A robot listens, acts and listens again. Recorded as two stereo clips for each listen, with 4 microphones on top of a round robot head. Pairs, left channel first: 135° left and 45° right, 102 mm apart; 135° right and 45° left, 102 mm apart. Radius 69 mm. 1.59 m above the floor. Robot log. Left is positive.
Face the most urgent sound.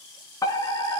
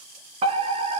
note: The fire alarm: 75° left.
cmd yaw +75
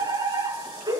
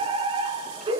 end: Facing the fire alarm.